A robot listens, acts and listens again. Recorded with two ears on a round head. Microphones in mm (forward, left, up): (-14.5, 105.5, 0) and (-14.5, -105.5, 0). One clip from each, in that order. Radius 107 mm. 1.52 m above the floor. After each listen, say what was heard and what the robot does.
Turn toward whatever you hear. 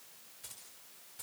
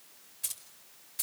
The keys jangling: about 45° right or 135° right. Turn 45° right.
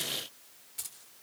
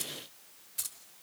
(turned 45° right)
Found it: keys jangling, straight ahead, 2 to 4 m away.